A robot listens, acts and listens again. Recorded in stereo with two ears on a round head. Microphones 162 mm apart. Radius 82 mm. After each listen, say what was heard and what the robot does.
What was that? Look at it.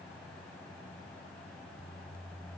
Keep listening.
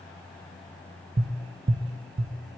The tapping: about 60° right or 120° right. Turn 60° right.
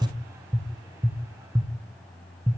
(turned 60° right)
So it is at 20° right. Turn 20° right.
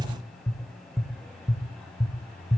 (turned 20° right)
Facing the tapping.